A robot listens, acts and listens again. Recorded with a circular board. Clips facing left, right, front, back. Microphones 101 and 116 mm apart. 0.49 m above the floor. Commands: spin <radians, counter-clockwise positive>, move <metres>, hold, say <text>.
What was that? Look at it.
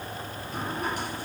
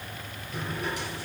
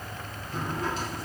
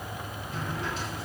spin 0.87
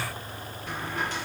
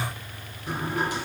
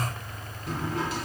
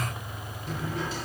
spin -0.26
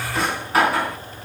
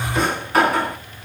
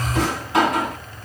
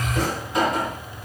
say Found it: a drawer, straight ahead.